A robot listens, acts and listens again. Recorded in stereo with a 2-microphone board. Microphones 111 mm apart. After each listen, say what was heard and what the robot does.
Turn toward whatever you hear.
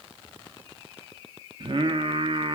The singing: about 45° right or 135° right. Turn 45° right.
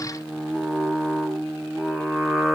Found it: singing, straight ahead.